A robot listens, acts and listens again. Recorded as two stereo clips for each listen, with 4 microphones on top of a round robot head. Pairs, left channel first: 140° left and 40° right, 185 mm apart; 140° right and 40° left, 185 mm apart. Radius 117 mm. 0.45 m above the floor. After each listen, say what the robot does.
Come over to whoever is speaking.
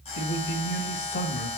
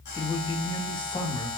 Turn 160° left.
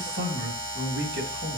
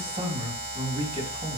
Turn 20° right.
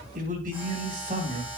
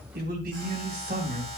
Drive 1.0 m forward.
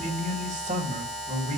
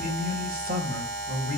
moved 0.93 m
Drive 1.0 m forward.
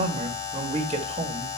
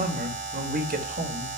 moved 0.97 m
Turn 10° left.
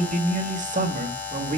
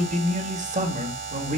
Drive 1.0 m forward.
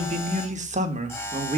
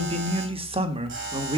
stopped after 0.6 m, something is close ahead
Turn 10° right.
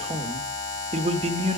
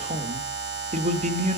Arrived at the man speaking, straight ahead.